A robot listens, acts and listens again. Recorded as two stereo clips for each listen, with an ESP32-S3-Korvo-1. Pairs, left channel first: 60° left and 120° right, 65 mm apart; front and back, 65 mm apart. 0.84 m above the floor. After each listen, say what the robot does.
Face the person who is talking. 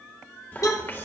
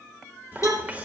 Turn 115° left.
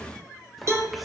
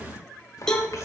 Turn 35° right.
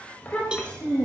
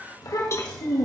Turn 10° right.
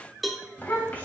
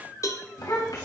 Found it: a child speaking, straight ahead, 2 to 4 m away.